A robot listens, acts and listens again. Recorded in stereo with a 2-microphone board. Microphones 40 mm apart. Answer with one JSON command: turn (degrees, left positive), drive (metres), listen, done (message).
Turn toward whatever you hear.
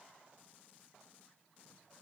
{"listen": true}
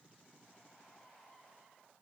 {"listen": true}
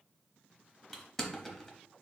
{"turn": 30}
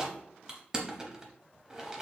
{"turn": -15}
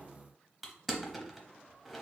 {"done": "Found it: crushing, straight ahead."}